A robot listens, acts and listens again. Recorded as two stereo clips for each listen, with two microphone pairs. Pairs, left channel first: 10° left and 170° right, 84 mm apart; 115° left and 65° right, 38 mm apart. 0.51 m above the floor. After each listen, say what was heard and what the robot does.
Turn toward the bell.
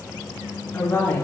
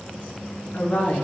Keep listening.
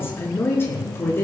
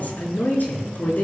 Keep listening.
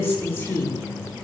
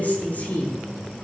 I can't make out a bell to turn to.